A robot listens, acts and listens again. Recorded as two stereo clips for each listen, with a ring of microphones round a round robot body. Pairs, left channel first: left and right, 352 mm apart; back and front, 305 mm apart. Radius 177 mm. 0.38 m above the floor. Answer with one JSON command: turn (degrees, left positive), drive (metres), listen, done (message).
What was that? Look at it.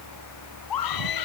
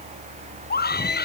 {"turn": 120}
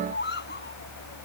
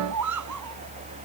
{"turn": 25}
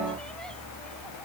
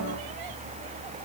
{"listen": true}
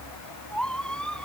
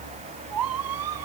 {"done": "Facing the scream."}